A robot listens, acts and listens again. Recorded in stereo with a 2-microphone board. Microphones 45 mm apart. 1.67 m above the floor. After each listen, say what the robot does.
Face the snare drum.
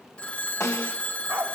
Turn 90° left.
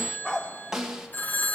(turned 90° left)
Turn 10° right.
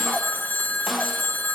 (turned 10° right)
Keep listening.
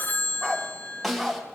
Found it: a snare drum, straight ahead.